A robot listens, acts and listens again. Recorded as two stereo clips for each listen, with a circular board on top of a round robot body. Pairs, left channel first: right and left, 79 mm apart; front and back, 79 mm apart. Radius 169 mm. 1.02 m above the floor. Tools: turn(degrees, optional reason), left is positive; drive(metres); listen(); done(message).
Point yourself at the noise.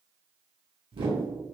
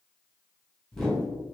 turn(degrees=85, reason="The whoosh: 85° left.")
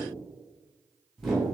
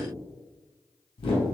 done("Facing the whoosh, under 1 m away.")